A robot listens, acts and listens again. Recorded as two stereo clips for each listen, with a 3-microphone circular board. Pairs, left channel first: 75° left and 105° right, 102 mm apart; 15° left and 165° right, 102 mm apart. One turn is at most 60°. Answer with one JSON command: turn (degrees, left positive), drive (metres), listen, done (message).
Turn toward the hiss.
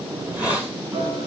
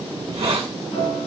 {"turn": 60}
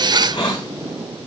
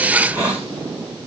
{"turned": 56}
{"turn": 60}
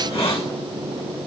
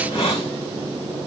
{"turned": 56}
{"turn": 60}
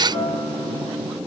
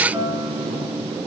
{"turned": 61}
{"listen": true}
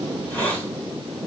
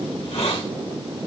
{"done": "Found it: a hiss, straight ahead."}